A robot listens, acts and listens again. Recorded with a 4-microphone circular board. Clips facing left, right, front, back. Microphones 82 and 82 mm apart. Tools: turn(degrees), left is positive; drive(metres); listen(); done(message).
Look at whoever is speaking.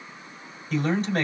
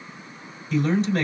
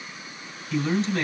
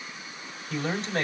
turn(degrees=140)
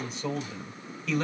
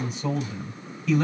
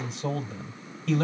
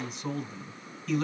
done("Facing the man speaking, 2 to 4 m away.")